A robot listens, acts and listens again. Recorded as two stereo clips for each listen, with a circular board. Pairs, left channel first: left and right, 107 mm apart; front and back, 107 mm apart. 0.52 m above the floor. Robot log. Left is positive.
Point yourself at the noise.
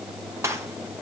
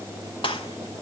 note: The gunshot: 30° right.
cmd yaw -30
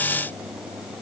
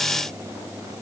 end: I heard a gunshot from this way, but can't make it out now.